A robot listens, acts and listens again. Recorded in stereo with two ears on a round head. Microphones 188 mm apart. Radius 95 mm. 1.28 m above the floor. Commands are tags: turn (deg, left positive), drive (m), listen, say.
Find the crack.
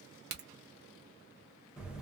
<turn deg="-50"/>
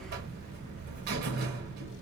<listen/>
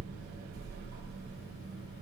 <say>I heard a crack, but can't make it out now. It was about straight ahead or 80° right.</say>